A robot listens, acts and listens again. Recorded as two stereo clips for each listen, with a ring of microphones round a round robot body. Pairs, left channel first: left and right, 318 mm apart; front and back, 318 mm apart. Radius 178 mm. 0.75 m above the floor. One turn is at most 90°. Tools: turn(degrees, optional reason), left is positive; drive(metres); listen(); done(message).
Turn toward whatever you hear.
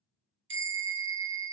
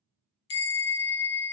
turn(degrees=-40, reason="The bell: 40° right.")
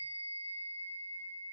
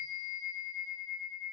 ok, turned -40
done("Facing the bell.")